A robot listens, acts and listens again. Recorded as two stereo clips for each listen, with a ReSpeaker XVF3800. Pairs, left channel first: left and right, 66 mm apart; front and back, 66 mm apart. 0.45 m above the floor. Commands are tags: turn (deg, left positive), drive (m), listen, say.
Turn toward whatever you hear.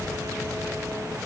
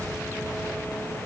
<listen/>
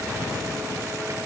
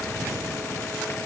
<listen/>
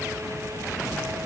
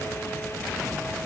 <say>I can't make out anything.</say>